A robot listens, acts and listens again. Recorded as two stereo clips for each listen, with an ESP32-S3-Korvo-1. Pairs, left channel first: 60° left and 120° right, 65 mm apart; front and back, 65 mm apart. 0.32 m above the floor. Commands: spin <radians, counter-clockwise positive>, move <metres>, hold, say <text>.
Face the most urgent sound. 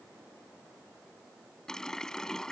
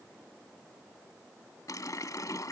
hold
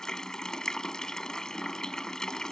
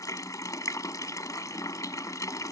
hold
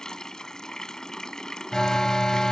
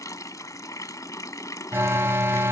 spin 2.44
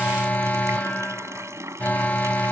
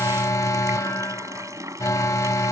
say Facing the alarm.